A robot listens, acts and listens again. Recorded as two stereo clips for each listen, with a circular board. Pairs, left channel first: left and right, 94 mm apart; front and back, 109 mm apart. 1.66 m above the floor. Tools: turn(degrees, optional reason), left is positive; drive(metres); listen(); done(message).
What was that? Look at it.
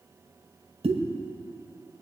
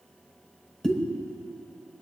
turn(degrees=-85, reason="The pop: 85° right.")
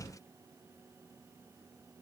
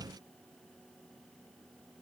done("I heard a pop from this way, but can't make it out now.")